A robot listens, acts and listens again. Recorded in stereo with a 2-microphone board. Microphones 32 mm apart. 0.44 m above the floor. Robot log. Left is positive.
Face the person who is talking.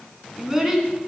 cmd yaw -30
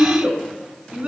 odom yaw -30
note: So it is at 135° right.
cmd yaw -135
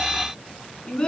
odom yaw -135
note: The child speaking is now 30° left.
cmd yaw +30
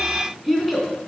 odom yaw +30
end: Facing the child speaking.